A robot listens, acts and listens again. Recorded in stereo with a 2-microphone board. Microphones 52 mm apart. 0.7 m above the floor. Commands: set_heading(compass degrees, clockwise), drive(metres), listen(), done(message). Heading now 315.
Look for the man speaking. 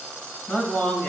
set_heading(285)
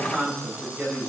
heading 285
set_heading(305)
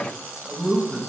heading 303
set_heading(313)
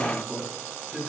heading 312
done("Found it: a man speaking, straight ahead, over 4 m away.")